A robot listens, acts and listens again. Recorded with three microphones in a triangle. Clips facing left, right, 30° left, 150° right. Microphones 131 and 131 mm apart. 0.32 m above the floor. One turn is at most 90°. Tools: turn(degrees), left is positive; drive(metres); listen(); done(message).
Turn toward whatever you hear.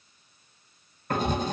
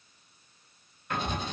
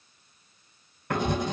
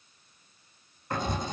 turn(degrees=45)
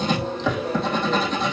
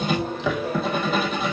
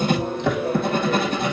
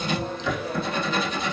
done("Found it: writing, straight ahead.")